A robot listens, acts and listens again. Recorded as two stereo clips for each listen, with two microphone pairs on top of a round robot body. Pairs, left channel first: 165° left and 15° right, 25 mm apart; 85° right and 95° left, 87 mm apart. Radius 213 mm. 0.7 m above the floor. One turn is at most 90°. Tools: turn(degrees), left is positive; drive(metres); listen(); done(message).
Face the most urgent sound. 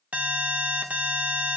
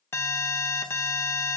turn(degrees=-25)
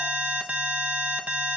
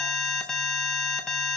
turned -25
done("Found it: an alarm, straight ahead.")